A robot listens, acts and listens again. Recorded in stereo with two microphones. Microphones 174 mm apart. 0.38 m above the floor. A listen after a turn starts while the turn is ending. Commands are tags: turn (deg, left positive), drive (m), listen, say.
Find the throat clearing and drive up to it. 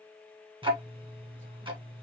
<listen/>
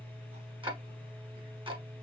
<listen/>
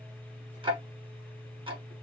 <say>I can't make out throat clearing to turn to.</say>